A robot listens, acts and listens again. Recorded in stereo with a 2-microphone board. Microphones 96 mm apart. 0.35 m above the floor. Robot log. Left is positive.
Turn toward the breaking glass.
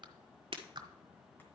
note: The breaking glass: about 70° right or 110° right.
cmd yaw -70
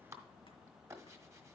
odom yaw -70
cmd idle
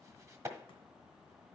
end: I heard breaking glass, but can't make it out now. It was about straight ahead or 40° right.